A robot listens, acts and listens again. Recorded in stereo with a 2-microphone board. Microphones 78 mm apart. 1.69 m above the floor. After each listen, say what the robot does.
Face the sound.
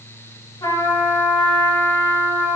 Turn 65° left.
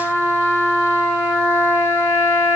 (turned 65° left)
Facing the trumpet, over 4 m away.